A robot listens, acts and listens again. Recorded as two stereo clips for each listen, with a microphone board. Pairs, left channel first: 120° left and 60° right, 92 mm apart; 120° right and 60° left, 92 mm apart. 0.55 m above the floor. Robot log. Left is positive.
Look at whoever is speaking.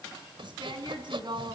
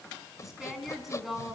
note: The woman speaking: 25° right.
cmd yaw -25
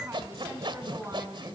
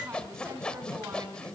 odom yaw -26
end: Facing the woman speaking, over 4 m away.